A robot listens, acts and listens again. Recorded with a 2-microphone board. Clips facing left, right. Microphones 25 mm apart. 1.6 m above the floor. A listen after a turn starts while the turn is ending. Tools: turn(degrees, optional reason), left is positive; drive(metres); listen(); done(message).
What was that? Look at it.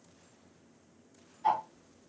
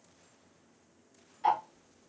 turn(degrees=-65, reason="The ticking: about 65° right or 115° right.")
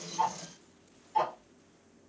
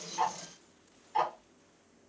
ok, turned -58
turn(degrees=-15, reason="So it is at 15° right.")
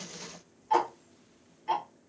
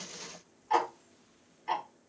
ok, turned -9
done("Facing the ticking, 1 to 2 m away.")